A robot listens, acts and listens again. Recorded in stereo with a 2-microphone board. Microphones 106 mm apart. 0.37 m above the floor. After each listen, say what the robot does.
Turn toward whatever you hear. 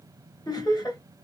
Turn 45° left.
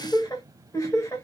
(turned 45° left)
Turn 30° left.
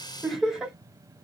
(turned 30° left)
Found it: laughter, straight ahead.